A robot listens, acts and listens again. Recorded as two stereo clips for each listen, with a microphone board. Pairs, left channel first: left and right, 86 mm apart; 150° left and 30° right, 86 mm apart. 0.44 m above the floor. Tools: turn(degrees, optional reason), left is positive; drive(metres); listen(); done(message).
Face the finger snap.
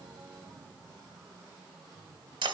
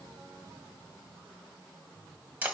listen()
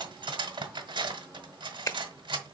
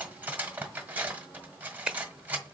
turn(degrees=50, reason="The finger snap: 50° left.")
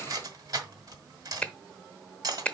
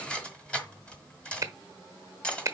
turn(degrees=15, reason="The finger snap is now 15° left.")
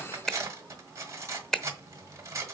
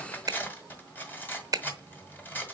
done("Found it: a finger snap, straight ahead.")